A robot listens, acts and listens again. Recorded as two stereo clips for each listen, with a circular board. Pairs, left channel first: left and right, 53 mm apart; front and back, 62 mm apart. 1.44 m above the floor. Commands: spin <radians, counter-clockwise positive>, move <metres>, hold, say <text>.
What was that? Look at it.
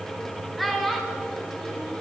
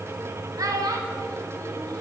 spin 3.05
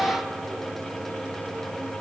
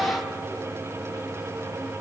hold
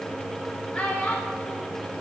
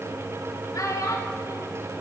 spin 0.44
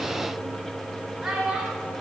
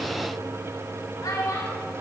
say Found it: a child speaking, straight ahead, 2 to 4 m away.